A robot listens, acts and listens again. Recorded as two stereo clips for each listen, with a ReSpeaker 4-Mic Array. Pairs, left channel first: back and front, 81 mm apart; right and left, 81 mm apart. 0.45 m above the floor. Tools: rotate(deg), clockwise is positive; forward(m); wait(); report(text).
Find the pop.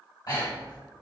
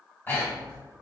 wait()
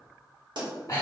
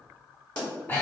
rotate(10)
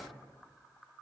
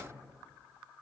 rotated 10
report("I heard a pop from this way, but can't make it out now.")